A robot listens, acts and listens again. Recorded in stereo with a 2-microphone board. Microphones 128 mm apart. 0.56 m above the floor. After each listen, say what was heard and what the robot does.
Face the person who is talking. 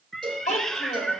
The child speaking: about 65° left or 115° left. Turn 65° left.
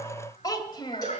So it is at 40° left. Turn 40° left.
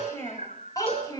The child speaking is now 30° left. Turn 30° left.
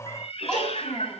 The child speaking is now 10° left. Turn 10° left.
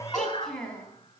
Facing the child speaking, 2 to 4 m away.